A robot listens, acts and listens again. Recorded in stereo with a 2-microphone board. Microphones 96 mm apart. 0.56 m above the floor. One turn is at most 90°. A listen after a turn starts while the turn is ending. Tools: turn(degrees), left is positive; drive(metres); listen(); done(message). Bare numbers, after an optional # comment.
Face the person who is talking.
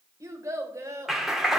# The child speaking: about 35° right or 145° right.
turn(-35)
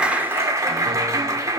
listen()
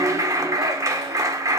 listen()
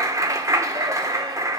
done("I heard a child speaking, but can't make it out now. It was about straight ahead or 110° right.")